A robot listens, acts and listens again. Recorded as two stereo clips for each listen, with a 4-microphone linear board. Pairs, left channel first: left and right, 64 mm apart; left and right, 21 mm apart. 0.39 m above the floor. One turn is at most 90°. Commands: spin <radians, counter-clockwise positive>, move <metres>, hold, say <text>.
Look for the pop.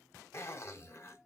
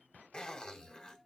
hold
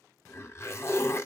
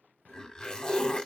hold
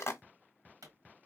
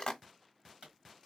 spin -1.05
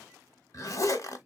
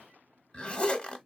hold
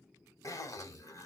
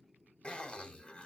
say I heard a pop, but can't make it out now. It was about straight ahead or 60° right.